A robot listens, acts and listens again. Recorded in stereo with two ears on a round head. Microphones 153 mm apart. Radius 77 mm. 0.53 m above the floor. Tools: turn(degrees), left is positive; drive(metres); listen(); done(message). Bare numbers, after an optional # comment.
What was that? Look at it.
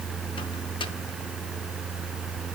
listen()
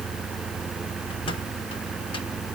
listen()
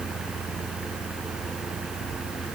done("I can't make out anything.")